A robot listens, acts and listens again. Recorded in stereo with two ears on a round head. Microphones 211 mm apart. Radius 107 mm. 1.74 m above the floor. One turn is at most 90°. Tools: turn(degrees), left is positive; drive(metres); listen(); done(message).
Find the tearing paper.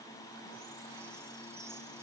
listen()
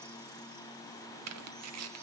turn(degrees=-90)
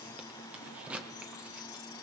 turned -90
done("Facing the tearing paper, 1 to 2 m away.")